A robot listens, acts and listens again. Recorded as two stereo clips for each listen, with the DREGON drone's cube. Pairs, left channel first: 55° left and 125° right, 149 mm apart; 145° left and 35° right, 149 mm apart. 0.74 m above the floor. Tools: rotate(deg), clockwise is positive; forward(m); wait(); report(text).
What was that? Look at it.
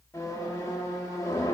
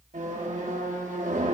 rotate(10)
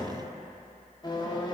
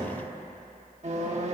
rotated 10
report("Found it: a squeak, straight ahead.")